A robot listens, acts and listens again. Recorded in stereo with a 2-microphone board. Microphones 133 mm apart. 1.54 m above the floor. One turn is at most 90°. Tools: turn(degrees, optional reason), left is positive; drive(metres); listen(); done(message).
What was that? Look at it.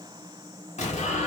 turn(degrees=55, reason="The explosion: about 55° left or 125° left.")
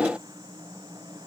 listen()
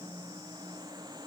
done("I heard an explosion, but can't make it out now. It was about straight ahead or 70° left.")